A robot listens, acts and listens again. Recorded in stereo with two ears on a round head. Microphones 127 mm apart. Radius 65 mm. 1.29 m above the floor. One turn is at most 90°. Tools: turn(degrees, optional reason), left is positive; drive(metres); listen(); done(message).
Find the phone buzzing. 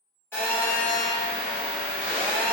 turn(degrees=15, reason="The phone buzzing: about 15° left or 165° left.")
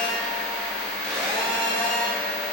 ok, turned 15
done("Found it: a phone buzzing, straight ahead, 1 to 2 m away.")